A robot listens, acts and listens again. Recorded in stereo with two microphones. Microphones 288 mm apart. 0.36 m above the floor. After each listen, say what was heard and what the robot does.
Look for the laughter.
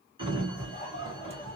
The laughter: about 20° left or 160° left. Turn 20° left.
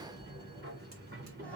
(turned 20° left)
Keep listening.
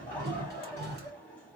Facing the laughter, 2 to 4 m away.